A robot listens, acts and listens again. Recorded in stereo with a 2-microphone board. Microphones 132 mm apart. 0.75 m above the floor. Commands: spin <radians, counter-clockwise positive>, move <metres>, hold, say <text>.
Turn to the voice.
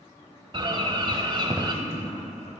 spin 0.87
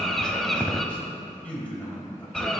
spin 0.17
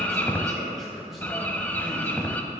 say Found it: a man speaking, straight ahead.